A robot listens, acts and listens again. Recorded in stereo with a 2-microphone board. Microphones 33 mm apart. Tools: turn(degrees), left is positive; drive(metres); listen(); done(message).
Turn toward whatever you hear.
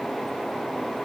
listen()
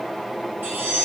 turn(degrees=-65)
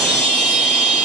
done("Found it: a chime, straight ahead, 2 to 4 m away.")